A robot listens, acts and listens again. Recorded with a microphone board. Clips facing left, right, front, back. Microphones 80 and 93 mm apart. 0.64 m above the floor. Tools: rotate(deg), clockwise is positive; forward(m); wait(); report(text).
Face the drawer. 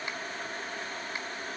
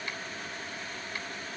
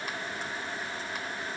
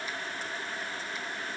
wait()
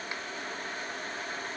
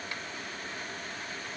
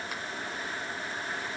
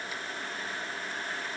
wait()
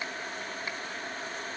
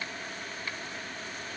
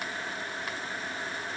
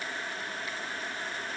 report("I can't make out a drawer to turn to.")